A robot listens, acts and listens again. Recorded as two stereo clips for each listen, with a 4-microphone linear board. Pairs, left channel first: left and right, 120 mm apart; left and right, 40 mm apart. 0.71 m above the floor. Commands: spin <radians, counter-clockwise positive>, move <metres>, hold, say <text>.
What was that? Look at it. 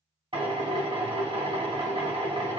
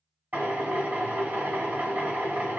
spin -0.87
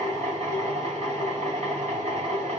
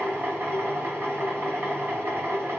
spin -1.40
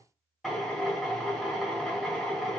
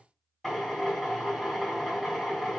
say Found it: a drill, straight ahead, 1 to 2 m away.